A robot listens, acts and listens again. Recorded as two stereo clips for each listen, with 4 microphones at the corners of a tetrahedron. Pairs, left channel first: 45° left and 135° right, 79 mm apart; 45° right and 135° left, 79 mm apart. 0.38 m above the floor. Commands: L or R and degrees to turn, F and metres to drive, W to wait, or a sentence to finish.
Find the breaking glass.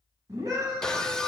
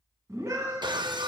L125
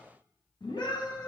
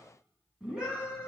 Facing where the breaking glass came from. I can't hear it now.